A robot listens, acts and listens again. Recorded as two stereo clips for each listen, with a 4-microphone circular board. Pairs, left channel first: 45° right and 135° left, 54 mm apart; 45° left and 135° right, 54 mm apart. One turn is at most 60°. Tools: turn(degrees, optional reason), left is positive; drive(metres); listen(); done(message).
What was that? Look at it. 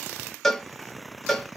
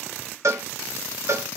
turn(degrees=-60, reason="The cowbell: 130° right.")
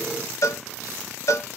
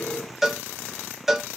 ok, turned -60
turn(degrees=-50, reason="The cowbell is now 50° right.")
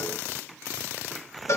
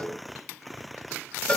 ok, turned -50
turn(degrees=-25, reason="The cowbell is now 25° right.")
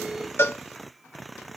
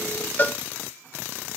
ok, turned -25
done("Found it: a cowbell, straight ahead, under 1 m away.")